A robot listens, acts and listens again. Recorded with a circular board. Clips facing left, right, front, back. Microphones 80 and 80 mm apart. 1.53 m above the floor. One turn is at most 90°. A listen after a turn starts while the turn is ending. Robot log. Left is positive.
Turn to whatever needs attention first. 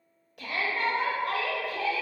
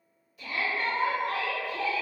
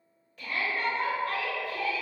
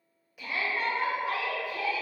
note: The shout: 100° left.
cmd yaw +90
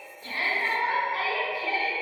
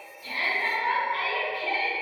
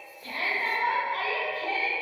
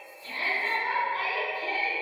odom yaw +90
note: The shout is now 15° left.
cmd yaw +15
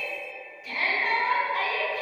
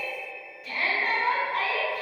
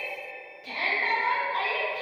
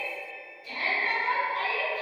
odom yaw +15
end: Found it: a shout, straight ahead, under 1 m away.